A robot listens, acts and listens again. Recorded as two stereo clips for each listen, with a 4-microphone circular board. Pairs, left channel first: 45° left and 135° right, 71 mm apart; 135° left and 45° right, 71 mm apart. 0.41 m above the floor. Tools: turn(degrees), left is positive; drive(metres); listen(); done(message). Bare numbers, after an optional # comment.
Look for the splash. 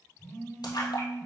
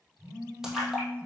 # The splash: 40° left.
turn(40)
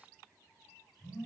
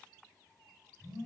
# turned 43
done("I heard a splash from this way, but can't make it out now.")